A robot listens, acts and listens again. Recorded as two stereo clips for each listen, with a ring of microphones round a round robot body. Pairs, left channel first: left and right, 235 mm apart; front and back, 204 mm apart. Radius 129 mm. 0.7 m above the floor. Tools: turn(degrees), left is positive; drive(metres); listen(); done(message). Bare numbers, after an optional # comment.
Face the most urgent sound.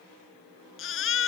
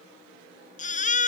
# The baby crying: 55° left.
turn(55)
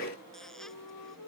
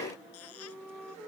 listen()
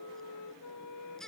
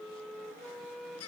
done("Facing the baby crying.")